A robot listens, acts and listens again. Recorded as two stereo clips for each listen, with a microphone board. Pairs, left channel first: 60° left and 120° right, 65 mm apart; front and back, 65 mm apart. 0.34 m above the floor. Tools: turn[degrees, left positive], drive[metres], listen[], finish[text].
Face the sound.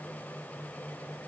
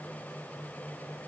Action: listen[]
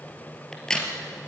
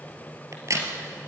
Thought: The crack: 140° left.
Action: turn[140]
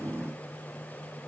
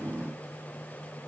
Action: finish[Facing where the crack came from. I can't hear it now.]